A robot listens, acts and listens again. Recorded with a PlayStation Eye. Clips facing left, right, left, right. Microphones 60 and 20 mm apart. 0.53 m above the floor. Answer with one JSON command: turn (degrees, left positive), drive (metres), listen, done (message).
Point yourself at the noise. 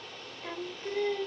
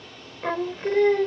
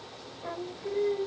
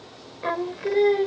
{"turn": -60}
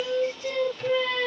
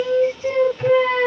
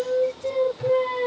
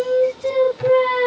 {"turn": -35}
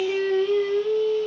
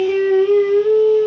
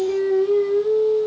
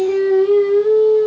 {"turn": -40}
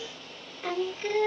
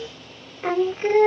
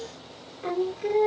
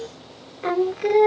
{"turn": -40}
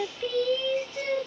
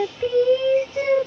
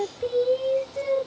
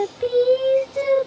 {"turn": -35}
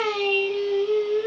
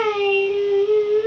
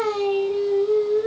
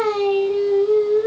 {"turn": -15}
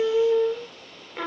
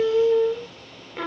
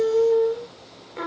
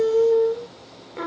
{"done": "Found it: singing, straight ahead."}